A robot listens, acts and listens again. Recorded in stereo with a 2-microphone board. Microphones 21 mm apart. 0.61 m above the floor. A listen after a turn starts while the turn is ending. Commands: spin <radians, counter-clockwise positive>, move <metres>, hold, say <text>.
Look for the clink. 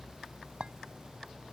spin -0.96
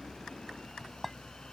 say Found it: a clink, straight ahead.